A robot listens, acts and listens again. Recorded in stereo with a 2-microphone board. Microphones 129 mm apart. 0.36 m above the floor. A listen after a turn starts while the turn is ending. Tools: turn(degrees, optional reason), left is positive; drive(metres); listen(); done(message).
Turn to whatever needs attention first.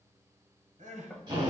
turn(degrees=-75, reason="The crying: about 75° right or 105° right.")
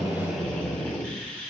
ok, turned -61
listen()
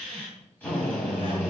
listen()
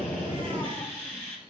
done("I heard crying, but can't make it out now. It was about 15° right or 45° right.")